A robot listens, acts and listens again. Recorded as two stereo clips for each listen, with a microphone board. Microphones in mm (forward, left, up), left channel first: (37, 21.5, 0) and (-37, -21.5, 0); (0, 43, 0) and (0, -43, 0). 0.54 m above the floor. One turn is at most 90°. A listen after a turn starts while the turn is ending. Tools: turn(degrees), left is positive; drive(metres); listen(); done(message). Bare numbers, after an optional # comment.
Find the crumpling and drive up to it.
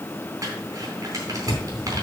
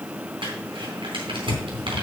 # The crumpling: 100° right.
turn(-90)
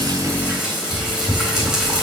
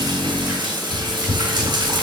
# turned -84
# Nothing new. It was at 15° right.
turn(-15)
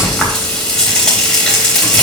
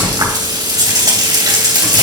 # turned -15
listen()
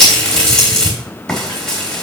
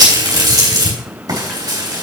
done("Facing where the crumpling came from. I can't hear it now. I did not reach it.")